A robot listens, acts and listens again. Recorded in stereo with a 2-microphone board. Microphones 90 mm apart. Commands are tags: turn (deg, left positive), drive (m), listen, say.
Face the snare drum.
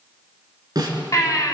<turn deg="-55"/>
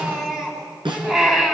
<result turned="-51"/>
<turn deg="-75"/>
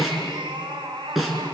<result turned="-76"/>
<say>Found it: a snare drum, straight ahead.</say>